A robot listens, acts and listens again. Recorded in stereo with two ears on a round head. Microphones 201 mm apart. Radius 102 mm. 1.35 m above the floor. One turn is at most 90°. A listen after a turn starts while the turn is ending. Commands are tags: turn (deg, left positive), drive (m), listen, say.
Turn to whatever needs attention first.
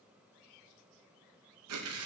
<listen/>
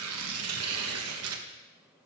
<listen/>
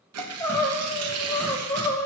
<turn deg="30"/>
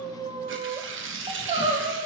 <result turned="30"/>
<turn deg="-25"/>
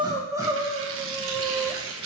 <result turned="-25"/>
<turn deg="-15"/>
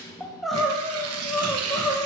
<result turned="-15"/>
<say>Facing the crying.</say>